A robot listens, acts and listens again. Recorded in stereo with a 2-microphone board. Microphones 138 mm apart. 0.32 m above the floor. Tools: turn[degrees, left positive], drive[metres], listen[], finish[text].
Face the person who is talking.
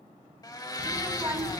Thought: The child speaking: about 20° right or 160° right.
Action: turn[-20]
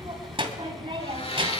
Thought: So it is at 135° right.
Action: turn[-135]
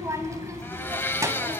Thought: The child speaking is now 25° right.
Action: turn[-25]
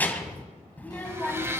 Thought: The child speaking is now 15° left.
Action: turn[15]
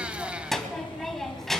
Action: finish[Facing the child speaking, 2 to 4 m away.]